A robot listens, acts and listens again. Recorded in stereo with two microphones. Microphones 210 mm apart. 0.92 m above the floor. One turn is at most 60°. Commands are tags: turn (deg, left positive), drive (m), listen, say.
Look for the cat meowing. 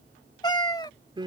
<turn deg="20"/>
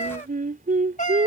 <turn deg="60"/>
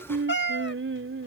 <turn deg="60"/>
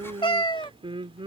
<turn deg="25"/>
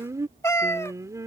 <turn deg="15"/>
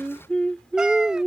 <listen/>
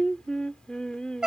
<say>Facing the cat meowing.</say>